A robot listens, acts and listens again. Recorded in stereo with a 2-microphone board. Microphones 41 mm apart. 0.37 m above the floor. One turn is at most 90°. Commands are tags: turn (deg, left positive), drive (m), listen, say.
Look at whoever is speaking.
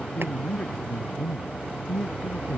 <turn deg="30"/>
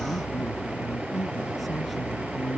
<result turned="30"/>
<say>Facing the man speaking.</say>